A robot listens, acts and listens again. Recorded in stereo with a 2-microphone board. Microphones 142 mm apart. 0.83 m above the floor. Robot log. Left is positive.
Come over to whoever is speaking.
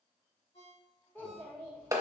cmd yaw +30
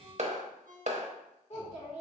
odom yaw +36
note: So it is at 130° left.
cmd yaw +130
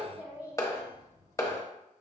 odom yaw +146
note: The child speaking is now 15° right.
cmd yaw -15
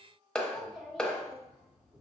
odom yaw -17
cmd fwd 1.0
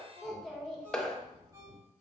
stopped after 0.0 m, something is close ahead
end: Something is in my way. I am facing the child speaking but have not reached it.